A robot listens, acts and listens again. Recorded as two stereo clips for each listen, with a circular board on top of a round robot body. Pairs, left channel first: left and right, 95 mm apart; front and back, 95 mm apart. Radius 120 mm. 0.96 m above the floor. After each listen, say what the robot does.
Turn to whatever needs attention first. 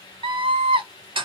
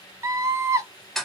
Turn 120° right.
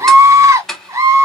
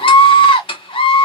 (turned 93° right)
Turn 30° right.
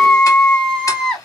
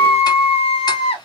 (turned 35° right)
Facing the scream, 1 to 2 m away.